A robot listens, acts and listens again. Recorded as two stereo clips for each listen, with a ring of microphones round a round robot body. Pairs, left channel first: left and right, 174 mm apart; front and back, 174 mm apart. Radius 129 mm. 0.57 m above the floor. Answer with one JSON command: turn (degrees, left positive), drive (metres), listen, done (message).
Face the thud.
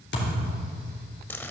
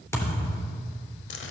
{"turn": 75}
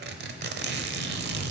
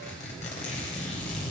{"done": "Facing where the thud came from. I can't hear it now."}